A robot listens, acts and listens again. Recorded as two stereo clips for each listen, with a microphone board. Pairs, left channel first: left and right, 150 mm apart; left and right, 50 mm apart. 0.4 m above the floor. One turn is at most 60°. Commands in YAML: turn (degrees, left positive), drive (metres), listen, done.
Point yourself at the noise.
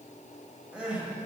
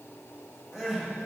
turn: -30
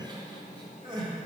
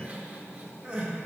turn: -60
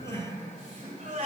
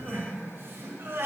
turn: -60
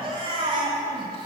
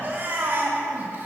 turn: -45
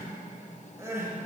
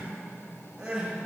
turn: -20
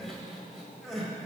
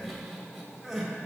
done: "Found it: crying, straight ahead, 1 to 2 m away."